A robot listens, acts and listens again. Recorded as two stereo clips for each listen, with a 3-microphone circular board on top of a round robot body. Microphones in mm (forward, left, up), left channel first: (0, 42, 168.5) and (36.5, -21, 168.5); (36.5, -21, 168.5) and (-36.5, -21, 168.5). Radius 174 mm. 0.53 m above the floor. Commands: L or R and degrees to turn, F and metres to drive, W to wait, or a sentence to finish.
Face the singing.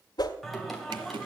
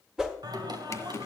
R155
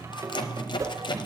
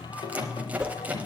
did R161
R20
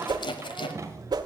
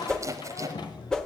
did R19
R10
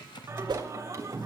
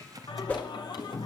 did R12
R10
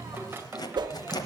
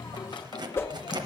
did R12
Facing the singing, 2 to 4 m away.